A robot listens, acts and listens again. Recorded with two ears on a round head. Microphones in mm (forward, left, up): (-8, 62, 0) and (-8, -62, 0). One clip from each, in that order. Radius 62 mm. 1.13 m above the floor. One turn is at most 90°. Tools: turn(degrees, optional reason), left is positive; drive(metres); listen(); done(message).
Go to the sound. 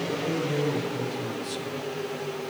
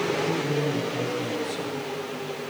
turn(degrees=20, reason="The man speaking: about 20° left or 160° left.")
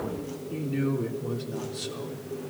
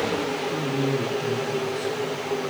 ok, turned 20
turn(degrees=90, reason="So it is at 140° left.")
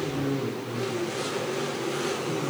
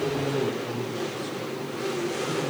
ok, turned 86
turn(degrees=50, reason="The man speaking is now 50° left.")
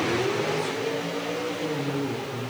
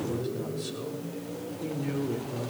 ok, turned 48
drive(metres=1.0)
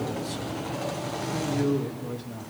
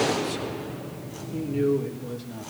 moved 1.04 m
drive(metres=1.0)
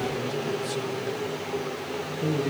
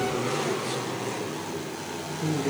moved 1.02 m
turn(degrees=10, reason="The man speaking is now 10° left.")
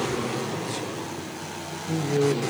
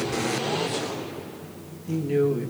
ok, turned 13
drive(metres=1.0)
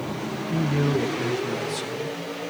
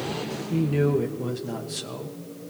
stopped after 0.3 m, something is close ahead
done("Arrived at the man speaking, straight ahead.")